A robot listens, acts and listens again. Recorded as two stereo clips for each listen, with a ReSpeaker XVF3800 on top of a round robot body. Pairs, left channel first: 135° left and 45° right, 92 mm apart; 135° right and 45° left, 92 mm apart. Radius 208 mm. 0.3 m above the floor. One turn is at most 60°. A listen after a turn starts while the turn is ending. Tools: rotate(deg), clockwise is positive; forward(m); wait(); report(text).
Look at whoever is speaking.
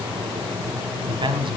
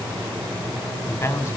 rotate(60)
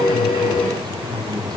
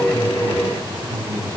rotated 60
report("Facing the man speaking.")